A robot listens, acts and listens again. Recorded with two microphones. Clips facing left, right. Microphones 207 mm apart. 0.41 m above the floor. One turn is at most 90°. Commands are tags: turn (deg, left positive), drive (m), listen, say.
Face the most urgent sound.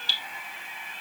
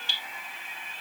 <listen/>
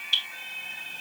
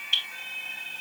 <listen/>
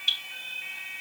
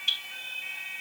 <say>I can't make out anything urgent, only dripping.</say>